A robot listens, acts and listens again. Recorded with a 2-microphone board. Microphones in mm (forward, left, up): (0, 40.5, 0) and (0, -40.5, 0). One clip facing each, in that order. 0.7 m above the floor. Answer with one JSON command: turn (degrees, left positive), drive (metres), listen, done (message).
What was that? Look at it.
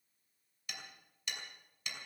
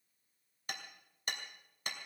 {"turn": -45}
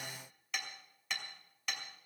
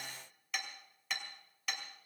{"done": "Facing the hammering."}